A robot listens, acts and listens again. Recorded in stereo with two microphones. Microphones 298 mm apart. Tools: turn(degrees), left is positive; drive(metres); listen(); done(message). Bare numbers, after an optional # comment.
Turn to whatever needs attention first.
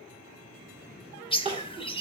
# The crying: about 20° right or 160° right.
turn(-20)
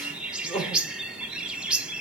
done("Facing the crying, 2 to 4 m away.")